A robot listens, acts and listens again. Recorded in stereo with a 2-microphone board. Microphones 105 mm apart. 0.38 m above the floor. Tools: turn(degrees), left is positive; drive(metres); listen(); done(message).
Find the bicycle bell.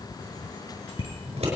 turn(degrees=70)
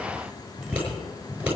done("Facing the bicycle bell.")